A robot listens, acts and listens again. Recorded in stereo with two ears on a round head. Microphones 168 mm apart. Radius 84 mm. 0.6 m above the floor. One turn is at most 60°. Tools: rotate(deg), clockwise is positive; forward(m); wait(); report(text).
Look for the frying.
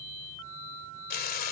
rotate(-50)
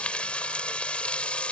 report("Facing the frying.")